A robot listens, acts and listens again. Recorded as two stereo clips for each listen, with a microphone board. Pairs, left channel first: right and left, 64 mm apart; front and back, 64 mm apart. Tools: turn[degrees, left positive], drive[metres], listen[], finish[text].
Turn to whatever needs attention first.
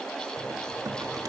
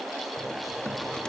Action: listen[]
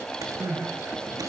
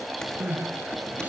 Thought: The crying: 115° left.
Action: turn[115]
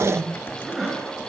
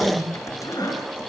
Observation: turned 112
Action: finish[Found it: crying, straight ahead.]